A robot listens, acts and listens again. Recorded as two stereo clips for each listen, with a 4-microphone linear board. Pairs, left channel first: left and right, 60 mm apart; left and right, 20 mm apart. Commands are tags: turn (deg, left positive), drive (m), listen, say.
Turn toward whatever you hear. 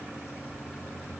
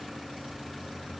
<listen/>
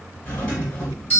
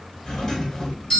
<turn deg="20"/>
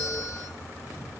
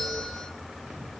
<say>Found it: a doorbell, straight ahead.</say>